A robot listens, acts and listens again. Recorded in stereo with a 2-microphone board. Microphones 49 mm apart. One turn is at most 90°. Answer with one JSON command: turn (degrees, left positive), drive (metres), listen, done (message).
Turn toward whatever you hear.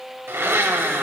{"turn": -60}
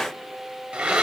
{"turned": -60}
{"turn": -25}
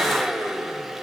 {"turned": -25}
{"turn": -10}
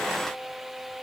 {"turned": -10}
{"listen": true}
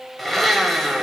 {"done": "Found it: a blender, straight ahead, 1 to 2 m away."}